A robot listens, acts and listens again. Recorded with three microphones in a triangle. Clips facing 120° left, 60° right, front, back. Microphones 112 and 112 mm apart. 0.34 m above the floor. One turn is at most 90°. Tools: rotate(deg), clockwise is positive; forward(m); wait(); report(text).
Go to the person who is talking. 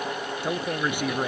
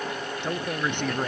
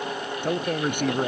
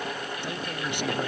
rotate(-40)
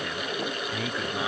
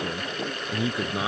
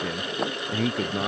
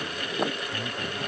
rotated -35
forward(1.0)
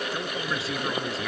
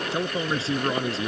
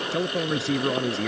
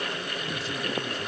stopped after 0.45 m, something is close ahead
report("Blocked. The man speaking is further on, straight ahead.")